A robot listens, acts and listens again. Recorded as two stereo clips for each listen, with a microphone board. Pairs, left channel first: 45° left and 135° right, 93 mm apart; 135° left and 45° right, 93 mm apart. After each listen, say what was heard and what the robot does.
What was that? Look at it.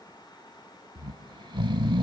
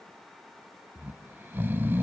The snoring: 110° right. Turn 110° right.
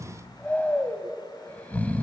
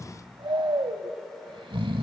The snoring is now 25° right. Turn 25° right.
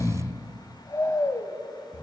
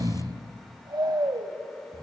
Facing the snoring.